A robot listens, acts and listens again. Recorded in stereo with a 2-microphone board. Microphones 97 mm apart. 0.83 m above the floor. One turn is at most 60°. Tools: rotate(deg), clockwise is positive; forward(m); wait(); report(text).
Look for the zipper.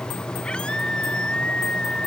wait()
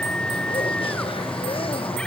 wait()
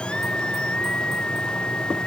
report("I can't make out a zipper, only a scream.")